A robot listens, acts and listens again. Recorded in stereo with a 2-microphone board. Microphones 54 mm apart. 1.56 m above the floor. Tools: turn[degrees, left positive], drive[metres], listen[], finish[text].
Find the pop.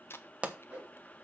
Thought: The pop: about 25° right or 155° right.
Action: turn[-25]
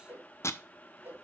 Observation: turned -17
Action: listen[]
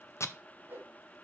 Action: finish[I heard a pop, but can't make it out now. It was about 10° right or 140° right.]